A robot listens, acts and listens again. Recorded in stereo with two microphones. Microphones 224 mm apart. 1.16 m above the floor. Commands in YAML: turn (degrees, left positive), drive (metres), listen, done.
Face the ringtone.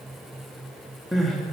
listen: true
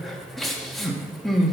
listen: true
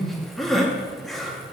done: "I can't make out a ringtone to turn to."